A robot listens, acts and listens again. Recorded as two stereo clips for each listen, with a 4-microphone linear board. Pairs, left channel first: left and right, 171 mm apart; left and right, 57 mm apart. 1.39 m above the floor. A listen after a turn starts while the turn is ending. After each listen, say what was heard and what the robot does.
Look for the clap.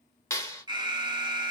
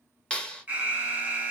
The clap: about 15° left or 165° left. Turn 15° left.
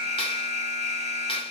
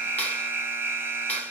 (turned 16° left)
Keep listening.
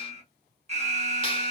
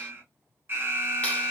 Keep listening.
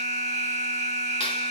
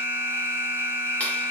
I heard a clap, but can't make it out now. It was about straight ahead or 150° left.